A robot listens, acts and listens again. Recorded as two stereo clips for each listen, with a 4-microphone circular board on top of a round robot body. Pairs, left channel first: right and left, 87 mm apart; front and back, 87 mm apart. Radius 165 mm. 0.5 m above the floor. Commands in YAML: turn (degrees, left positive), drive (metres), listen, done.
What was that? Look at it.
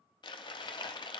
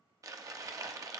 turn: -125
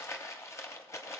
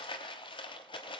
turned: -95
turn: -30
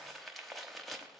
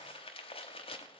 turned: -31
done: "Facing the crumpling."